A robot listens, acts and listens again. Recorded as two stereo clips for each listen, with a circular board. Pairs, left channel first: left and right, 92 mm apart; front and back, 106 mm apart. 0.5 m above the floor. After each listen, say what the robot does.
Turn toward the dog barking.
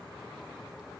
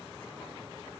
Keep listening.
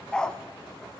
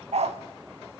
Turn 170° left.
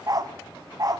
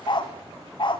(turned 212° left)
Turn 40° right.
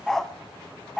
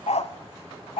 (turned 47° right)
Facing the dog barking.